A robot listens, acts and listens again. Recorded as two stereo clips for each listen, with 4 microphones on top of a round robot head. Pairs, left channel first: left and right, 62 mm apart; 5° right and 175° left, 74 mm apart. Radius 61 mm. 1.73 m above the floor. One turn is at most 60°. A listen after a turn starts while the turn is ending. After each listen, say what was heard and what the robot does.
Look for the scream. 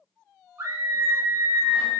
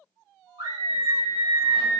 The scream: 145° right. Turn 60° right.
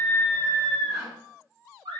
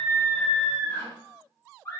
The scream is now 80° right. Turn 60° right.
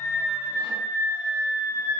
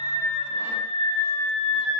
The scream is now 20° right. Turn 20° right.
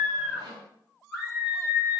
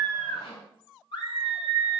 Facing the scream.